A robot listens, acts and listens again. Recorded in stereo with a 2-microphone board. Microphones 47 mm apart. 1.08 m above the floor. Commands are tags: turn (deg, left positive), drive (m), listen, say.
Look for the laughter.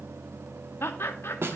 <turn deg="55"/>
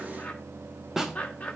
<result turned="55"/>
<turn deg="40"/>
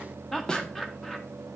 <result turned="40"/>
<turn deg="10"/>
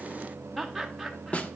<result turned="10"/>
<say>Facing the laughter, under 1 m away.</say>